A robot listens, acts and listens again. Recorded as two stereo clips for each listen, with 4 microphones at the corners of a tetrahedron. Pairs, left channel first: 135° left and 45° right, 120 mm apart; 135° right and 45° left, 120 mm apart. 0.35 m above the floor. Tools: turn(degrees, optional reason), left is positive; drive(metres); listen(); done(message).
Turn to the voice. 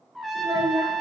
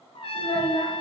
turn(degrees=-95, reason="The child speaking: 95° right.")
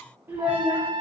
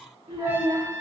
turn(degrees=25, reason="The child speaking is now 25° left.")
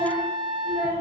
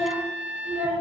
turn(degrees=25, reason="The child speaking is now 25° left.")
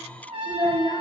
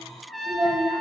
turn(degrees=15, reason="The child speaking is now 15° left.")
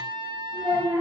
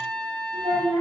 turn(degrees=10, reason="The child speaking is now 10° left.")
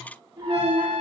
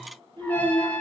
done("Found it: a child speaking, straight ahead, over 4 m away.")